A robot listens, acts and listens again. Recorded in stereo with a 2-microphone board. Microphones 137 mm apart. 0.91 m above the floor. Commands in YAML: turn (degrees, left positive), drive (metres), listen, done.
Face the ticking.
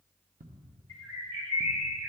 turn: -90
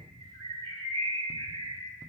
listen: true
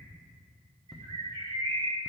done: "Facing the ticking."